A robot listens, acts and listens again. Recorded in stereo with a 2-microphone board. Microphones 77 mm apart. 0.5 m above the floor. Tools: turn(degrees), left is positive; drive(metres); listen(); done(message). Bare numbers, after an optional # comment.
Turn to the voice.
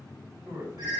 # The man speaking: about 45° right or 135° right.
turn(-45)
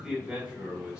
# So it is at 15° right.
turn(-15)
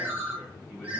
listen()
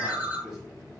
done("Found it: a man speaking, straight ahead.")